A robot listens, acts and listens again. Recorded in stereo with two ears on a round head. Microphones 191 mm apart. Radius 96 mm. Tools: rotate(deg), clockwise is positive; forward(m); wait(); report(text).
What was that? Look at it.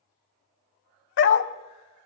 rotate(-60)
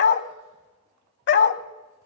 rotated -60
rotate(-55)
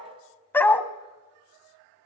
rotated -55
rotate(-10)
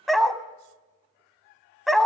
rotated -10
report("Facing the dog barking, under 1 m away.")